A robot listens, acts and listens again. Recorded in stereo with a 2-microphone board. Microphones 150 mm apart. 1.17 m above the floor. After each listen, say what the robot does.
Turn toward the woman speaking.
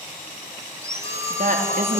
Turn 75° right.
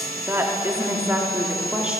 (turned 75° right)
Turn 10° right.
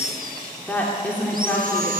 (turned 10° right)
Turn 10° left.
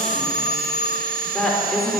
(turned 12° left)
Facing the woman speaking, 2 to 4 m away.